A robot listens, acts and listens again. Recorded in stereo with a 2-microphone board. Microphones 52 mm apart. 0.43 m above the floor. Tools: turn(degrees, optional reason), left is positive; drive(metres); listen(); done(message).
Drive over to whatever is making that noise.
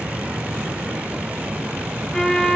turn(degrees=30)
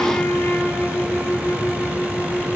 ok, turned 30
turn(degrees=150, reason="So it is at 150° left.")
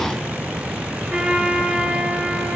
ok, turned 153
drive(metres=1.0)
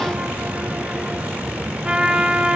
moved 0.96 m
turn(degrees=-10, reason="The trumpet is now 10° right.")
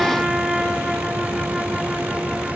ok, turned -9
drive(metres=1.0)
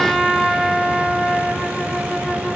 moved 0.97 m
drive(metres=1.0)
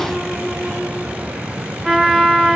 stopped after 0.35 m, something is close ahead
done("I am next to the trumpet.")